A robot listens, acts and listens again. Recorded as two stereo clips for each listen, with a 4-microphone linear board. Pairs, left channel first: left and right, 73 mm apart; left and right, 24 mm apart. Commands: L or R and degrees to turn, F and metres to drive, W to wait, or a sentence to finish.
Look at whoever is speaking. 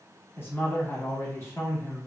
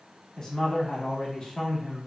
L30
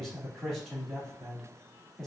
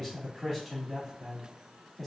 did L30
Facing the man speaking.